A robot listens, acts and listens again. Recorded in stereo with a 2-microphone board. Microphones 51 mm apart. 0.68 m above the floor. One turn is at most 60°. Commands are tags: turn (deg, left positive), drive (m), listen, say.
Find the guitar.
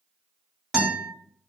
<turn deg="-20"/>
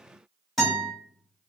<say>Found it: a guitar, straight ahead.</say>